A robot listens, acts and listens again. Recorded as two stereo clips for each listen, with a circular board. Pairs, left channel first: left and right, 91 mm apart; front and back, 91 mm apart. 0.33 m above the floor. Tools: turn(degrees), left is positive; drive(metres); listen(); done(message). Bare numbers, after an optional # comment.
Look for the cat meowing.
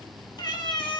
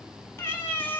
# The cat meowing: 70° left.
turn(70)
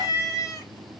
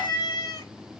# The cat meowing is now 45° left.
turn(45)
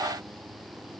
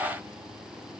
listen()
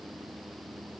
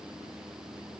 listen()
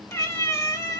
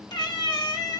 # The cat meowing is now 40° left.
turn(40)
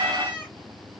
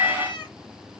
# The cat meowing is now 20° left.
turn(20)
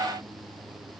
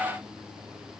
listen()
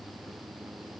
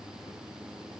listen()
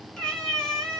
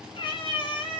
done("Facing the cat meowing, 1 to 2 m away.")